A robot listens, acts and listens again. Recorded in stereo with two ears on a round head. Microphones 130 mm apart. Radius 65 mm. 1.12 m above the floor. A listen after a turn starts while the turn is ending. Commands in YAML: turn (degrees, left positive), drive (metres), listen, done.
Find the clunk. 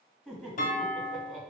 turn: 60
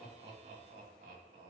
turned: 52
listen: true
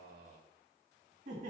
done: "I heard a clunk, but can't make it out now. It was about 5° left or 70° left."